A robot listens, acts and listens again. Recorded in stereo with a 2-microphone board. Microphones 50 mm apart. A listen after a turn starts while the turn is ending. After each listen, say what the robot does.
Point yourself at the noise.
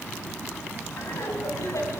Turn 90° left.
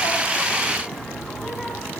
Facing the laughter, over 4 m away.